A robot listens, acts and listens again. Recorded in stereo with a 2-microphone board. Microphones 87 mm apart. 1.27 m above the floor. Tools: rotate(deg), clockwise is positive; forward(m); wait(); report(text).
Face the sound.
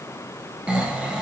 rotate(30)
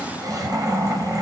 rotate(135)
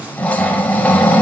rotate(-20)
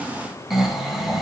report("Facing the snoring.")